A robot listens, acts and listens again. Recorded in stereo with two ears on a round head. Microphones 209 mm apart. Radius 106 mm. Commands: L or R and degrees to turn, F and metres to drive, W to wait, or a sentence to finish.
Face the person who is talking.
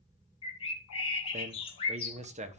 R30
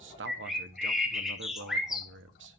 R120
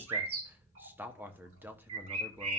R10
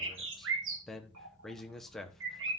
Found it: a man speaking, straight ahead.